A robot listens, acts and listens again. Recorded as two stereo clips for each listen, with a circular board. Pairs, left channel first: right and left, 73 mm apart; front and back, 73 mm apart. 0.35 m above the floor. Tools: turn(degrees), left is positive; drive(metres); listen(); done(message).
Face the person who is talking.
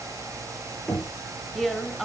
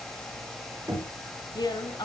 done("Found it: a woman speaking, straight ahead, 2 to 4 m away.")